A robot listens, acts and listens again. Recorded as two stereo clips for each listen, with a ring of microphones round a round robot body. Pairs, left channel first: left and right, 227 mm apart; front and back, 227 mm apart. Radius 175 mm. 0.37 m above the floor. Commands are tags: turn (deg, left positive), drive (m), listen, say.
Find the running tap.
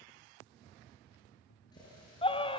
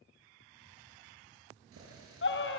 <turn deg="165"/>
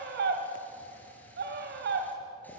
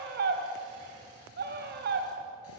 <listen/>
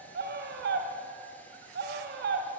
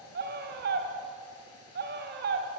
<listen/>
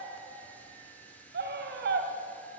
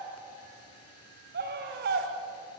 <say>I heard a running tap from this way, but can't make it out now.</say>